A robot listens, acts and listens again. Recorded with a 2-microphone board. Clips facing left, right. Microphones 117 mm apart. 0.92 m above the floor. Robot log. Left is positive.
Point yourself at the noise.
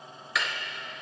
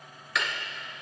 cmd yaw +30
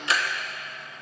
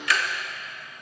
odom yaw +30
note: So it is at 150° left.
cmd yaw +150
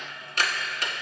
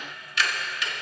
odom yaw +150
note: The ticking is now 50° left.
cmd yaw +50
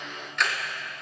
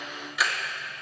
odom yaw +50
end: Found it: ticking, straight ahead.